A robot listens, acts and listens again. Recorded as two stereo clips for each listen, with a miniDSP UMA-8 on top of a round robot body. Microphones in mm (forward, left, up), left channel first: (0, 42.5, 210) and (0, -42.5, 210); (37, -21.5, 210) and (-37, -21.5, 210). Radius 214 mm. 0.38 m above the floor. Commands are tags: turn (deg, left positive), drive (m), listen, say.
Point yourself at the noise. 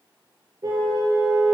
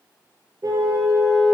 <turn deg="-135"/>
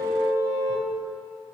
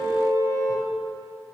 <turn deg="-35"/>
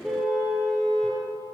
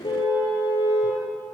<say>Found it: a car horn, straight ahead.</say>